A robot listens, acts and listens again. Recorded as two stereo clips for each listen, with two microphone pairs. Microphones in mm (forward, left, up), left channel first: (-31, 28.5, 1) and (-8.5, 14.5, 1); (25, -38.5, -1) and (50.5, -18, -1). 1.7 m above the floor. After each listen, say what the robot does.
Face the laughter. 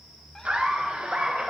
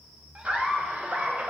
Facing the laughter.